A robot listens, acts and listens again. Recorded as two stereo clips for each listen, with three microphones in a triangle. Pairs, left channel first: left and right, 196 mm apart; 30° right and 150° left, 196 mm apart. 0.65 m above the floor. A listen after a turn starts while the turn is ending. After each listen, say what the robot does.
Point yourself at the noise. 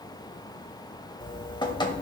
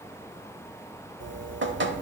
Turn 155° left.
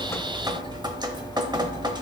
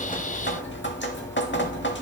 Turn 20° right.
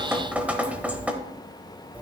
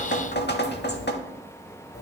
Facing the dripping, under 1 m away.